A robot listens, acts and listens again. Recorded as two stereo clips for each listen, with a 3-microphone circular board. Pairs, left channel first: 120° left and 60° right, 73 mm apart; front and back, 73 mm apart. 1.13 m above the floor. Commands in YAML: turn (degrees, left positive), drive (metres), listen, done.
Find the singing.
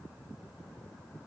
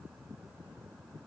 listen: true
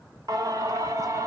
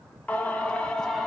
turn: -85
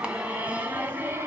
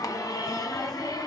done: "Found it: singing, straight ahead."